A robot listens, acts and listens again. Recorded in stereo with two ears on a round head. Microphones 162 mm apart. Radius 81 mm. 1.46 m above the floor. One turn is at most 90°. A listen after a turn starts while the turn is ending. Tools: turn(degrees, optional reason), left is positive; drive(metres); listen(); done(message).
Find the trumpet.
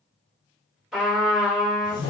turn(degrees=30)
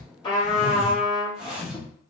turn(degrees=90, reason="So it is at 155° left.")
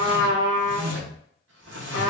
turn(degrees=60, reason="The trumpet is now 60° left.")
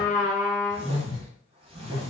turn(degrees=10, reason="The trumpet is now 10° left.")
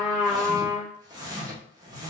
done("Facing the trumpet.")